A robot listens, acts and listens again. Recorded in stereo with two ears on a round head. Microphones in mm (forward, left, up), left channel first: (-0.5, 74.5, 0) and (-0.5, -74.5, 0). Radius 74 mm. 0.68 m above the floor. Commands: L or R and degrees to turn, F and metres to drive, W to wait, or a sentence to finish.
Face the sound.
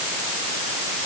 W
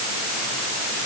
W
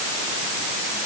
I can't make out anything to turn to.